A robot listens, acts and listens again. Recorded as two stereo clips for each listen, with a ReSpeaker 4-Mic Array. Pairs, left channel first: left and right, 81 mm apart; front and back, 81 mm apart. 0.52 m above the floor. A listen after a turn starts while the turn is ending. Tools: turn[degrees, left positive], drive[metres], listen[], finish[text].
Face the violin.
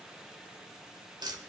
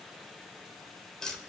Action: listen[]
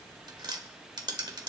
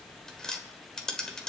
Action: listen[]
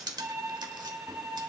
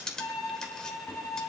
Thought: The violin: 45° right.
Action: turn[-45]
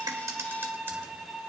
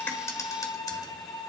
Action: finish[Facing the violin, 2 to 4 m away.]